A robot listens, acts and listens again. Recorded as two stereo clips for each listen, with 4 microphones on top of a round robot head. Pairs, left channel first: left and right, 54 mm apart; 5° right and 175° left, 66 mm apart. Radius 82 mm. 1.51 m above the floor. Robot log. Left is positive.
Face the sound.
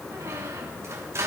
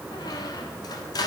note: The squeak: 40° right.
cmd yaw -40
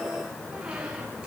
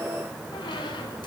note: The squeak is now 10° right.
cmd yaw -10
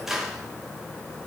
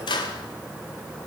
end: Found it: a squeak, straight ahead, 1 to 2 m away.